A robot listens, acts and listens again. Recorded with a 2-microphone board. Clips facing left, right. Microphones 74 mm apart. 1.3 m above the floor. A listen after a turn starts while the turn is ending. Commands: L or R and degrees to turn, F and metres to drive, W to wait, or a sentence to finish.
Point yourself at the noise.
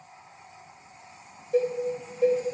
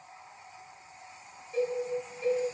L90
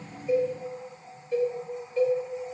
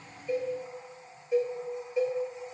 R10
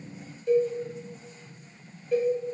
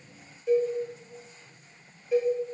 Found it: a cowbell, straight ahead.